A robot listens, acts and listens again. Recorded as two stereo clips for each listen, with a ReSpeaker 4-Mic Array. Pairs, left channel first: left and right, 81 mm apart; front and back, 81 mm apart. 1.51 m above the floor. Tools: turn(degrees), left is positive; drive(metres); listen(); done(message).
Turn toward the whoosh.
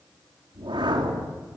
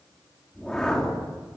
turn(degrees=-80)
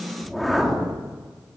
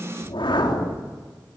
done("Found it: a whoosh, straight ahead.")